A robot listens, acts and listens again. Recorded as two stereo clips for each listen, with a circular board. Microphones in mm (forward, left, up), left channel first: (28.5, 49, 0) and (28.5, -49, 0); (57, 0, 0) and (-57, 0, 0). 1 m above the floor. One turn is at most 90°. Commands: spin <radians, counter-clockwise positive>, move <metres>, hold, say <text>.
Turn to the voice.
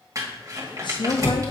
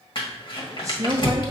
spin 1.57
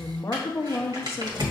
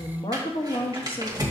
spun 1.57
spin 0.52
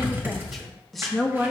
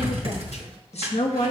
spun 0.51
say Facing the woman speaking.